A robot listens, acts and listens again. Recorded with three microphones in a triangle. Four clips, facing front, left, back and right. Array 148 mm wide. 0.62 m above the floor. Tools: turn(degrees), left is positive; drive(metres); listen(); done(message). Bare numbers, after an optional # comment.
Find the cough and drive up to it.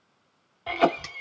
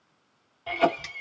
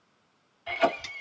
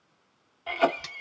drive(1.0)
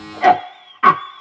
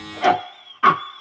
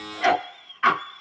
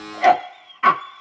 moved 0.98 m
# The cough is now 10° left.
turn(10)
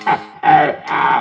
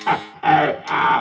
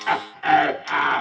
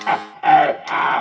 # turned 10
drive(1.0)
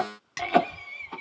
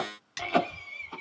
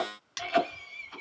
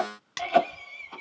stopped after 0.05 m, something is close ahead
done("Arrived at the cough, straight ahead.")